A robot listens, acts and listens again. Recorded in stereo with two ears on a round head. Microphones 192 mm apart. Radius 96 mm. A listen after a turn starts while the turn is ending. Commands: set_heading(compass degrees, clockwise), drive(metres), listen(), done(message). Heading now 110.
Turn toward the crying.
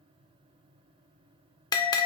listen()
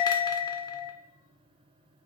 listen()
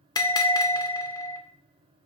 done("I can't make out crying, only a bell.")